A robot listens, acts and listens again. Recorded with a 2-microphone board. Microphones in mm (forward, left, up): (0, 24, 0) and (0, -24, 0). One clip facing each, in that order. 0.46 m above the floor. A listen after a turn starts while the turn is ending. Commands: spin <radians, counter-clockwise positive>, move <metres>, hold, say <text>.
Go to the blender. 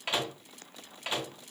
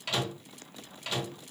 hold
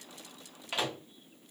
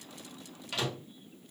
hold
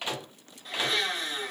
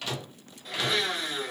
spin -0.52
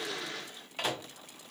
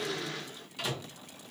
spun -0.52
hold
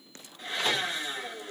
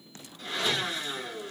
spin 0.44
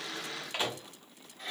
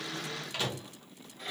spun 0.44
move 1.0
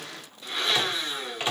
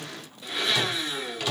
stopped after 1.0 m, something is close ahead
spin -0.17
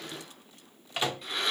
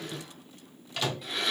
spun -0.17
say I am next to the blender.